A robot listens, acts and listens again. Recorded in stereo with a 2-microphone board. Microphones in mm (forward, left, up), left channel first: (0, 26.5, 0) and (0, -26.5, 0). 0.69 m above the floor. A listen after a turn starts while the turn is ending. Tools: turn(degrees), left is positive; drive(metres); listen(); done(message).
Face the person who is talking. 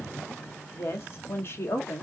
turn(degrees=50)
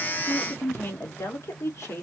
turn(degrees=75)
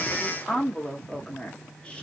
turn(degrees=20)
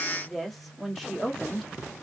done("Found it: a woman speaking, straight ahead.")